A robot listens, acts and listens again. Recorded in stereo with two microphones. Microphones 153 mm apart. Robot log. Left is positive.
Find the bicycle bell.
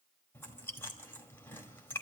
cmd idle
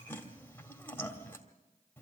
cmd idle
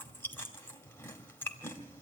end: I can't make out a bicycle bell to turn to.